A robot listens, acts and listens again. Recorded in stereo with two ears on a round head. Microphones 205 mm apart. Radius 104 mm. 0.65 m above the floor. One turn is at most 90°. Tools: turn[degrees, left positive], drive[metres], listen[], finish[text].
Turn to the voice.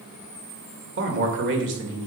Thought: The man speaking: about 55° right or 125° right.
Action: turn[-55]
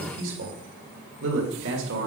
Thought: So it is at 60° right.
Action: turn[-60]
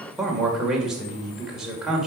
Action: finish[Found it: a man speaking, straight ahead, 2 to 4 m away.]